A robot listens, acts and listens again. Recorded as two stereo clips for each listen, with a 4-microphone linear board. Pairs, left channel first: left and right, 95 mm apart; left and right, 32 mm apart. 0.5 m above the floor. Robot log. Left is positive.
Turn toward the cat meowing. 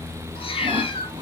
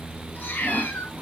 cmd yaw +90
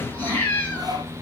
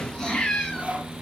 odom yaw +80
note: So it is at 15° left.
cmd yaw +15
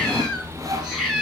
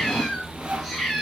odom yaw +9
end: Found it: a cat meowing, straight ahead, 2 to 4 m away.